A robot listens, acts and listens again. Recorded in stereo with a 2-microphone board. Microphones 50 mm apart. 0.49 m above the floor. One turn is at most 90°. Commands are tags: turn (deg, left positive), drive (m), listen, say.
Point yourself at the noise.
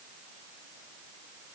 <listen/>
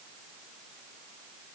<listen/>
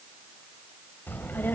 <turn deg="45"/>
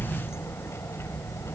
<turn deg="85"/>
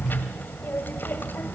<turn deg="50"/>
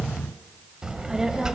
<turn deg="-15"/>
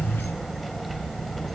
<say>Found it: a child speaking, straight ahead, 2 to 4 m away.</say>